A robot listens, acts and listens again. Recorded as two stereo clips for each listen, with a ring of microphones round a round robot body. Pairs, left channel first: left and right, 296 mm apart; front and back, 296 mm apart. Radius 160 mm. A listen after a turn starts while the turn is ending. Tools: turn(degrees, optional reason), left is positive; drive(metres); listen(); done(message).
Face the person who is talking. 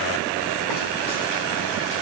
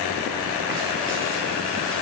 listen()
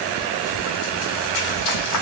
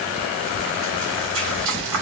listen()
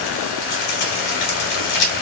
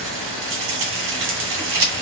done("I can't make out anyone speaking, only frying.")